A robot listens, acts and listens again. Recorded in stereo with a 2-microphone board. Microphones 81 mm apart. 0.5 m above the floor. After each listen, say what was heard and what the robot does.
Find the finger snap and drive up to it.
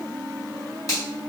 The finger snap: about 45° left or 135° left. Turn 45° left.
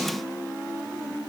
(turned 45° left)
Keep listening.
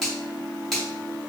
Drive 1.0 m forward.
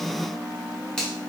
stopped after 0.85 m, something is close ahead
The finger snap is now 10° left. Turn 10° left.
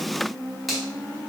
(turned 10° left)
I am next to the finger snap.